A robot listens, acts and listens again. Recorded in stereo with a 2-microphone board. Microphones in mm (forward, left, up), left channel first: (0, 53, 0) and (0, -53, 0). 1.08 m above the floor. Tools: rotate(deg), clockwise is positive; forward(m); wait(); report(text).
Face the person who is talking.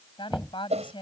rotate(-50)
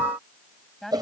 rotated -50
report("Facing the woman speaking.")